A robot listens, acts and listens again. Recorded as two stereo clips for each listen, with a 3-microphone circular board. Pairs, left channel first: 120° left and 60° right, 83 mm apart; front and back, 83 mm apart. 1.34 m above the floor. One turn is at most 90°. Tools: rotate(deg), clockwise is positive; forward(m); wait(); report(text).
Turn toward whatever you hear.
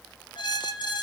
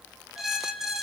rotate(-90)
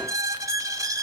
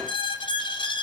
rotate(10)
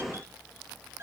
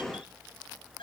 report("Found it: a squeak, straight ahead, 2 to 4 m away.")